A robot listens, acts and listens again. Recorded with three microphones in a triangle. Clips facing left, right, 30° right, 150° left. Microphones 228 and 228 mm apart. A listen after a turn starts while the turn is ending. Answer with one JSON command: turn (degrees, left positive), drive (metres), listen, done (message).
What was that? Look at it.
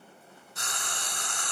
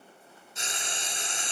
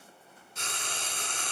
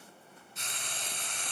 {"turn": -20}
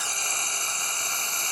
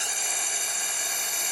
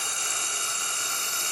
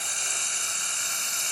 {"turn": -10}
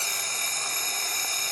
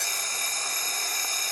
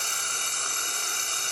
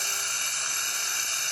{"done": "Facing the frying, under 1 m away."}